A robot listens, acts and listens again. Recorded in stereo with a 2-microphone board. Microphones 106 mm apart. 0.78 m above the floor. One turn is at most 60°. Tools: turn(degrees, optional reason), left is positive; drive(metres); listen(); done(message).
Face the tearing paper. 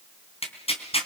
turn(degrees=60, reason="The tearing paper: about 70° left or 110° left.")
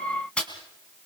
turn(degrees=10, reason="So it is at 10° left.")
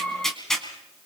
done("Facing the tearing paper, 2 to 4 m away.")